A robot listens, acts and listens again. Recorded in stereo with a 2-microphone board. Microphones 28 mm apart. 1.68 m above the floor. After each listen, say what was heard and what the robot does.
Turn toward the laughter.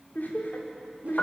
Turn 90° left.
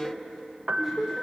So it is at 15° right. Turn 15° right.
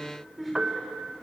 Facing the laughter.